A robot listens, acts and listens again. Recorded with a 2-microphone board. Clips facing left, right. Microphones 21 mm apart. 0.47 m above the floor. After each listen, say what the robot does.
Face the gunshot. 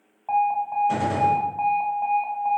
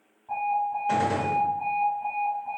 Turn 45° right.
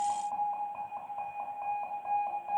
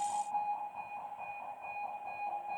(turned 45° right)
Keep listening.
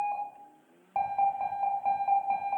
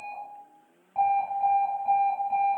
I heard a gunshot, but can't make it out now. It was about straight ahead or 90° right.